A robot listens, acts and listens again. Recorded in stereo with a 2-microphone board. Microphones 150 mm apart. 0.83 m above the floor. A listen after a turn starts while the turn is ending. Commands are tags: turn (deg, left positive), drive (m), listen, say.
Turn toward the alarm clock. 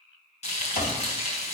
<turn deg="90"/>
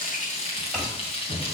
<say>Facing the alarm clock.</say>